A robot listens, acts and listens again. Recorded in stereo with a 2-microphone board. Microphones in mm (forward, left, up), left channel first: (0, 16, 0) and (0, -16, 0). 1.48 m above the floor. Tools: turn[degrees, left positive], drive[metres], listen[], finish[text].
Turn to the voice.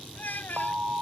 Thought: The child speaking: about 70° left or 110° left.
Action: turn[70]
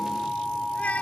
Action: listen[]
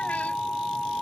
Action: listen[]
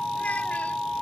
Action: finish[I heard a child speaking, but can't make it out now. It was about straight ahead or 40° left.]